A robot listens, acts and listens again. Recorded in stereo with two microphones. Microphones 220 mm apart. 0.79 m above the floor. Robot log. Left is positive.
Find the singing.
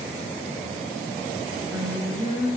note: The singing: about 15° right or 165° right.
cmd yaw -15
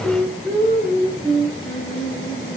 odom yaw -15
note: So it is at 30° left.
cmd yaw +30
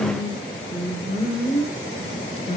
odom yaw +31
note: The singing is now 30° left.
cmd yaw +30
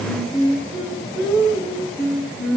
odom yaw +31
end: Facing the singing.